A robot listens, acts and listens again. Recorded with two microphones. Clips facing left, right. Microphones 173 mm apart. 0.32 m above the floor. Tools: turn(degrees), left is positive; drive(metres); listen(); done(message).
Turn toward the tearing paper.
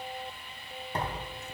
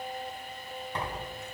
turn(degrees=40)
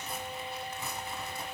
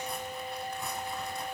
done("Facing the tearing paper, under 1 m away.")